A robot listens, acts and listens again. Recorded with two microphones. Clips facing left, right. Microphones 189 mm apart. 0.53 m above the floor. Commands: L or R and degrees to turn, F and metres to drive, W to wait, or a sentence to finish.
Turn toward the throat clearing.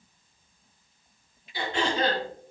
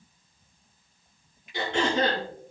R90
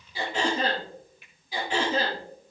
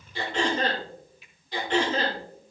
L10
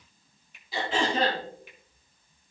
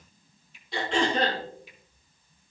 Found it: throat clearing, straight ahead, over 4 m away.